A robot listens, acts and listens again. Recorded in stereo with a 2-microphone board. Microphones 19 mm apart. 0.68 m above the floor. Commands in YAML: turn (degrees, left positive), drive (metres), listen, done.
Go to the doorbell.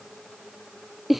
listen: true
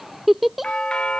turn: 65
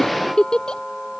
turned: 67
turn: 10
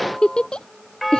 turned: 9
drive: 1.0
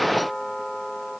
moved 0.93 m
drive: 1.0
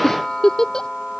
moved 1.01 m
turn: 10
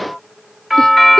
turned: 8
drive: 1.0
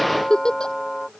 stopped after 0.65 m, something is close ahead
done: "I am next to the doorbell."